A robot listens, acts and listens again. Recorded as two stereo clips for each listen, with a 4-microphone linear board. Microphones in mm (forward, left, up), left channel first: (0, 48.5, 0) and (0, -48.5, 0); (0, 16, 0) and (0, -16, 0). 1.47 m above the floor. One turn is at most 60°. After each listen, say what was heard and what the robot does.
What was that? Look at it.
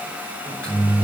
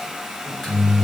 Turn 30° left.
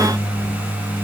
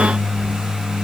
So it is at 135° left. Turn 60° left.
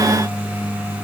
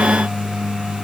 The microwave is now 100° left. Turn 60° left.
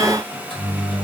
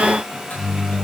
The microwave is now 65° left. Turn 60° left.
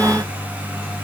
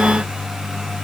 The microwave is now 15° left. Turn 15° left.
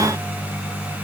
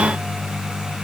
Found it: a microwave, straight ahead.